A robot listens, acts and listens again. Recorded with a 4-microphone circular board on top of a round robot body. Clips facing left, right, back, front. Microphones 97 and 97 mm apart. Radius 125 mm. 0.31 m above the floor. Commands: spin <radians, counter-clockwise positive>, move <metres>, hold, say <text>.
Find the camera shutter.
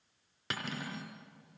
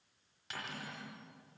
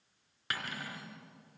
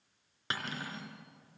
hold
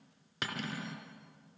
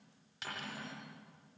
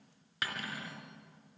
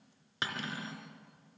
hold
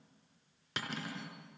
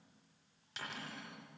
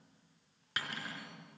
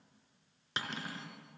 say I can't make out a camera shutter to turn to.